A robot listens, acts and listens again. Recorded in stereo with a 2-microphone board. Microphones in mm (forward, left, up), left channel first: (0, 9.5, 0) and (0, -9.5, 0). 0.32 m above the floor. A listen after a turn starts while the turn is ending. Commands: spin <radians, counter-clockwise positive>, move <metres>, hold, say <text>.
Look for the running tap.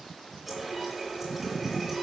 spin -0.52
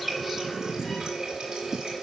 spin -2.44
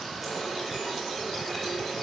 spin 0.26
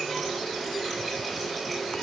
say Facing the running tap, 2 to 4 m away.